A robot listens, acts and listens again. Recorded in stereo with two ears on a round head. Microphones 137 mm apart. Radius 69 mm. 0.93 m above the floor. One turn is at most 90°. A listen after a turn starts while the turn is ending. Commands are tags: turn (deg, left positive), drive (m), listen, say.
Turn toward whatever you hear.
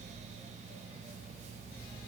<listen/>
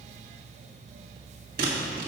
<turn deg="-65"/>
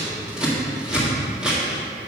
<say>Found it: scissors, straight ahead, 1 to 2 m away.</say>